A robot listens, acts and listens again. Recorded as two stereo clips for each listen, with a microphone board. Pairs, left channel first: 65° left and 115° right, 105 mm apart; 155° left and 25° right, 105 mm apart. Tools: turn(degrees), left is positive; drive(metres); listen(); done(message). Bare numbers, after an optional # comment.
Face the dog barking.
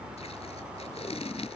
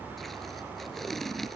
listen()
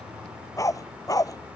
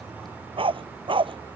# The dog barking: 15° left.
turn(15)
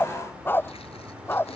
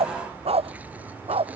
done("Found it: a dog barking, straight ahead.")